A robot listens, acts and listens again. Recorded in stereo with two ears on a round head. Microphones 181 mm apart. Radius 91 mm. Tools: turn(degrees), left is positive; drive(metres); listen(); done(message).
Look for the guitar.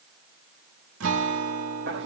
turn(degrees=-90)
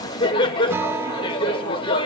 turn(degrees=-15)
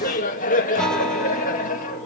done("Found it: a guitar, straight ahead.")